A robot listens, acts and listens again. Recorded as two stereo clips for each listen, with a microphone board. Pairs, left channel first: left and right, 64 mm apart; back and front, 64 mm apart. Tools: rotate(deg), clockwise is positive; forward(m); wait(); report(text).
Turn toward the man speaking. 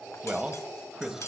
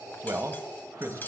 rotate(10)
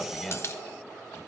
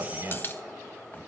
report("Facing the man speaking, 1 to 2 m away.")